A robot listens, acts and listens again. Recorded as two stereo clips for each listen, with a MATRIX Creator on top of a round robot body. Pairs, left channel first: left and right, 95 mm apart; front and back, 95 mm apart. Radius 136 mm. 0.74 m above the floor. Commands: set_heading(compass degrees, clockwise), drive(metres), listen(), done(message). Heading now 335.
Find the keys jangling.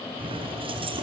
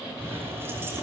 set_heading(85)
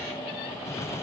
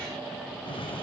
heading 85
listen()
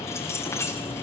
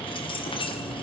set_heading(55)
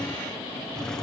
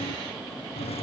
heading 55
done("Facing the keys jangling, over 4 m away.")